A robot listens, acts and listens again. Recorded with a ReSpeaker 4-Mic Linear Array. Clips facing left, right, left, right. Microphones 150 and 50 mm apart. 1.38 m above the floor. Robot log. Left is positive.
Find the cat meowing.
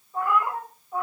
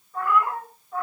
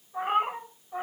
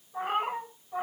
cmd yaw +30
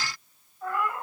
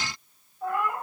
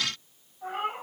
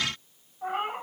note: So it is at 25° right.
cmd yaw -25
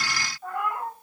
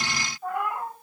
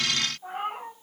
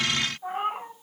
note: The cat meowing is now 15° right.
cmd yaw -15
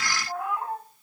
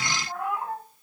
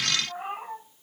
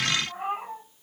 end: Found it: a cat meowing, straight ahead, over 4 m away.